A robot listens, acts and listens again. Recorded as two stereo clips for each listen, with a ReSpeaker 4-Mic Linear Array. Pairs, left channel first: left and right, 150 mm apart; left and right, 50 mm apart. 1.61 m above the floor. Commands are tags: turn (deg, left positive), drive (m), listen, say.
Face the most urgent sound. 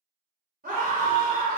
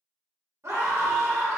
<turn deg="-65"/>
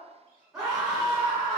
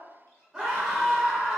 <say>Facing the scream, under 1 m away.</say>